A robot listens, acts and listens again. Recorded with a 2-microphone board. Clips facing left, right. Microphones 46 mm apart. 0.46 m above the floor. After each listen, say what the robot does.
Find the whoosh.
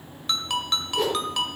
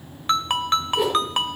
Turn 30° right.
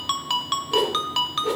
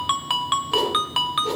Turn 20° left.
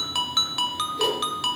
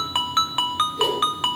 Facing the whoosh, over 4 m away.